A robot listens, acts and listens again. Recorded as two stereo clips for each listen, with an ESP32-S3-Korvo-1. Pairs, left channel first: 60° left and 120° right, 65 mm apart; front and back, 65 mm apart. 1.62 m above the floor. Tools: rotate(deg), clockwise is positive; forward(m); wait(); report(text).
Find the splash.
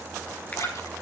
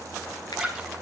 rotate(-90)
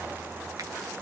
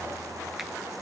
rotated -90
report("I heard a splash from this way, but can't make it out now.")